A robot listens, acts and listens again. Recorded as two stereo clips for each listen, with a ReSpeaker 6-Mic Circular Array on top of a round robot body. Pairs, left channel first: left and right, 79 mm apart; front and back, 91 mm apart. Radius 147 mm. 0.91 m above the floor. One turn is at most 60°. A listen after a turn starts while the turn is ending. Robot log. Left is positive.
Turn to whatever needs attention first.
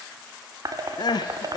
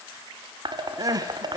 note: The crying: 125° left.
cmd yaw +60
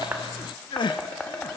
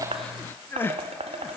note: The crying is now 70° left.
cmd yaw +60
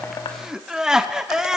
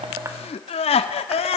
note: The crying is now 10° right.
cmd yaw -10
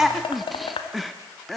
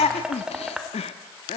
end: Facing the crying.